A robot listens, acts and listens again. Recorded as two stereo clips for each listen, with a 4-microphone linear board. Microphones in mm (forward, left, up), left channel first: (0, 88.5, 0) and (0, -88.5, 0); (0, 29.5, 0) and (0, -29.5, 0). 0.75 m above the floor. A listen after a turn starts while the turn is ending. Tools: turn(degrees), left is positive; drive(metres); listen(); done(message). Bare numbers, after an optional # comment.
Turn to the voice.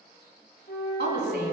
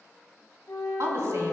# The woman speaking: about 60° right or 120° right.
turn(-60)
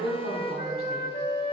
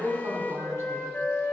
# So it is at 60° right.
turn(-60)
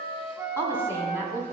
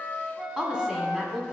# The woman speaking is now 15° right.
turn(-15)
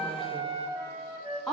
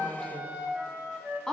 done("Facing the woman speaking, 1 to 2 m away.")